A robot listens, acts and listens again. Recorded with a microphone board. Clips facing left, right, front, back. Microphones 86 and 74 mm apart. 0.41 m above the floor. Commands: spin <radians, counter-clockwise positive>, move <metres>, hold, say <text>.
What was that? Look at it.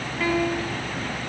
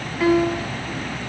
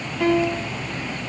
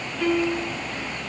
spin -0.17
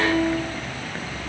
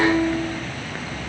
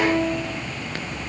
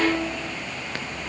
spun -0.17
hold
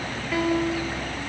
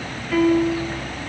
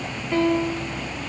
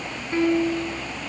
say Found it: a piano, straight ahead.